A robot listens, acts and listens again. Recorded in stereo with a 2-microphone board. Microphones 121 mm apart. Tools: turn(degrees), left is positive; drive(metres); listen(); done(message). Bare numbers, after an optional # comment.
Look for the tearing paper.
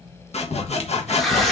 turn(30)
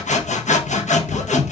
listen()
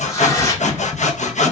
# So it is at 150° left.
turn(150)
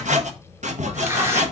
# The tearing paper is now 25° right.
turn(-25)
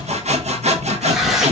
done("Facing the tearing paper, 1 to 2 m away.")